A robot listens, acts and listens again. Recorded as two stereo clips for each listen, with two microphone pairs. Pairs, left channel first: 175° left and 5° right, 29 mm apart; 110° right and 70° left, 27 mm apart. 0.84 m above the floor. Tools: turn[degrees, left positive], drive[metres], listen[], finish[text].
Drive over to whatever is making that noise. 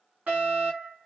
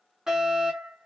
Action: drive[1.0]
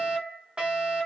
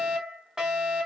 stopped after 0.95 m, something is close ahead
Thought: The fire alarm is now 10° left.
Action: turn[10]
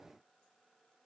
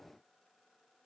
Action: finish[I am next to the fire alarm.]